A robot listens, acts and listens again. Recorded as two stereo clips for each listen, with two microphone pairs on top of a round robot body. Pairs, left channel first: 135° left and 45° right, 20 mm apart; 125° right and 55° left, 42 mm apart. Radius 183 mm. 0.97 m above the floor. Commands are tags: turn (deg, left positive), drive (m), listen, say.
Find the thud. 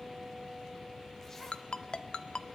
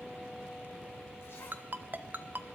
<listen/>
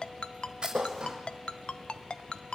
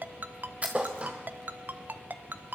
<say>Found it: a thud, straight ahead.</say>